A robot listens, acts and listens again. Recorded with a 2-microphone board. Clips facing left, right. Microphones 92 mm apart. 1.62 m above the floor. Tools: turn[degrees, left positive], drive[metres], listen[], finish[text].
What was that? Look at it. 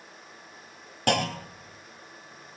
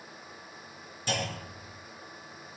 Thought: The clunk: about 65° left or 115° left.
Action: turn[65]
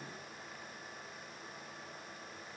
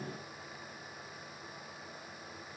Action: listen[]
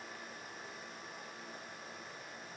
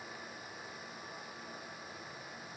Action: finish[I heard a clunk, but can't make it out now. It was about straight ahead or 50° left.]